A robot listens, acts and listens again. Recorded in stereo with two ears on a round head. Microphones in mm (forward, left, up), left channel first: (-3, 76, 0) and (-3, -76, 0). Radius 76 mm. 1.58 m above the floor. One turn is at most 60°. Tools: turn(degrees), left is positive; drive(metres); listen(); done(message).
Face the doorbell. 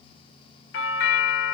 turn(degrees=60)
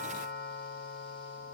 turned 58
turn(degrees=55)
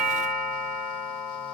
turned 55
done("Facing the doorbell.")